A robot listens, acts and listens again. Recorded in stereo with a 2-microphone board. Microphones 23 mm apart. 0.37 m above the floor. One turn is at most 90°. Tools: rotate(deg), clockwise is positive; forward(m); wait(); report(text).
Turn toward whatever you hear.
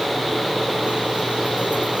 wait()
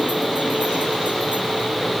wait()
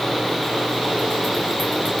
report("I can't make out anything to turn to.")